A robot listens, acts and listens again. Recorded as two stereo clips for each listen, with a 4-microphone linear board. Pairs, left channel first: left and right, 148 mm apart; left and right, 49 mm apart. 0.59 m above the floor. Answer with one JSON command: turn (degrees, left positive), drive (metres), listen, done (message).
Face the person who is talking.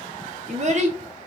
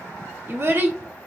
{"turn": -50}
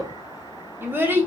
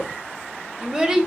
{"turn": -15}
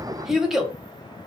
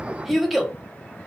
{"done": "Found it: a child speaking, straight ahead, under 1 m away."}